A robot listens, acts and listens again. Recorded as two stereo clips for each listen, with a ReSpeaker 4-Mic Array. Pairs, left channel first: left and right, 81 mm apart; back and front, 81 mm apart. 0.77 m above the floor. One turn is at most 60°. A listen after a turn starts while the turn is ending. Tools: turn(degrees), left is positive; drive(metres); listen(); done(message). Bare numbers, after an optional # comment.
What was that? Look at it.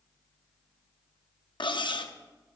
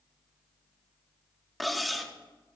# The cutlery clinking: 90° left.
turn(60)
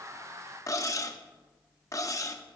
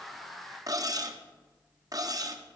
# The cutlery clinking is now 45° left.
turn(45)
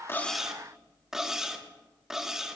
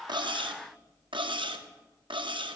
done("Found it: cutlery clinking, straight ahead, under 1 m away.")